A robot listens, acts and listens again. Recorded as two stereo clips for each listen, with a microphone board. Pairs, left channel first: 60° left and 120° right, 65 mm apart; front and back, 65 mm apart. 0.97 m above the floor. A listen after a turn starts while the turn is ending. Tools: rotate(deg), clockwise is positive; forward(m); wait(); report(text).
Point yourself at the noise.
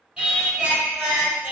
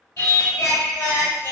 rotate(40)
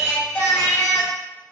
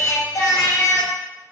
report("Facing the singing, under 1 m away.")